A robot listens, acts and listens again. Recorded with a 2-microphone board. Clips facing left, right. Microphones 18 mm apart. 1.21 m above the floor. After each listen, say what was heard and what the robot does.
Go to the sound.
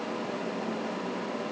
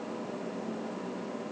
Keep listening.
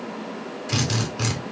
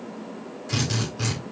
The drill: about 30° left or 150° left. Turn 30° left.
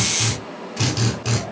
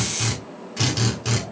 Drive 1.0 m forward.
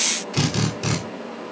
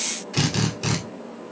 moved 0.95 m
Drive 1.0 m forward.
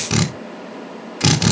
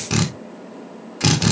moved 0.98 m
The drill is now 15° left. Turn 15° left.
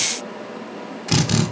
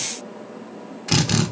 Drive 1.0 m forward.
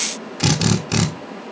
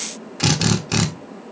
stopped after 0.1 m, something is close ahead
Arrived at the drill, straight ahead.